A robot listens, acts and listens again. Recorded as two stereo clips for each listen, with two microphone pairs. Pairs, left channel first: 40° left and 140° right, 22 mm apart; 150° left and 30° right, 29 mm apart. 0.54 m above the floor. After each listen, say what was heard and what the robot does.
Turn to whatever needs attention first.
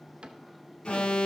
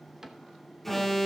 The alarm: 75° left. Turn 75° left.
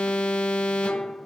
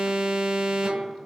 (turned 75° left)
The alarm is now 30° left. Turn 30° left.
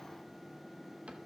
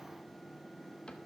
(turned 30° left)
Keep listening.
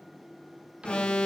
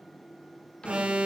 The alarm is now 15° left. Turn 15° left.
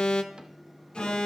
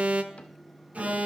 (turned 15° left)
Facing the alarm.